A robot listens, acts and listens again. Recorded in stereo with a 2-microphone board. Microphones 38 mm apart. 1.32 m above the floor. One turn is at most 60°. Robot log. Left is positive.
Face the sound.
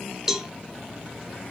note: The cowbell: about 15° right or 165° right.
cmd yaw -15
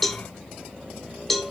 end: Found it: a cowbell, straight ahead.